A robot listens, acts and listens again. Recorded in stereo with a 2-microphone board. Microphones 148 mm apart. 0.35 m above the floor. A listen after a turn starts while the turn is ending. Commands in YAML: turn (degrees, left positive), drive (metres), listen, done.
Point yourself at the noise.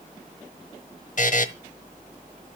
turn: 55
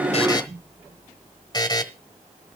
turn: 35
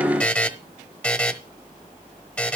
turn: 10
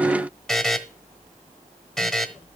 done: "Facing the buzzer, 1 to 2 m away."